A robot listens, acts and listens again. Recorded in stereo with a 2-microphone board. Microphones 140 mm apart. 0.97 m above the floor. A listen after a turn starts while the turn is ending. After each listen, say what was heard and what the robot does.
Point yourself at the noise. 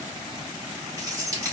The keys jangling: about 25° right or 155° right. Turn 25° right.
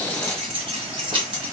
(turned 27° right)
The keys jangling: about 35° right or 145° right. Turn 35° right.
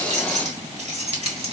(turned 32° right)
So it is at 135° right. Turn 135° right.
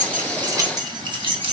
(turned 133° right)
The keys jangling is now 45° right. Turn 45° right.
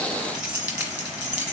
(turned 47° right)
The keys jangling is now 10° right. Turn 10° right.
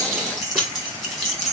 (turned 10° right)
Found it: keys jangling, straight ahead, 1 to 2 m away.